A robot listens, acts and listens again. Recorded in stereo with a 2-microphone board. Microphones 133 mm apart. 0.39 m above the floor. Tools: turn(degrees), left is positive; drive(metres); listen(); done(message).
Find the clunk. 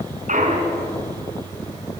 turn(degrees=-75)
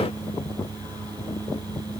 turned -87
listen()
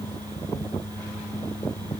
done("I heard a clunk, but can't make it out now. It was about 15° left or 20° right.")